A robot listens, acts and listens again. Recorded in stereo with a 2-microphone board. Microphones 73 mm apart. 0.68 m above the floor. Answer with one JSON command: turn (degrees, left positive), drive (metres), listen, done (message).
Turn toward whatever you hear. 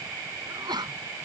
{"turn": -70}
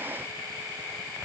{"listen": true}
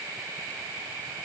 {"done": "I heard a sneeze, but can't make it out now. It was about straight ahead or 40° right."}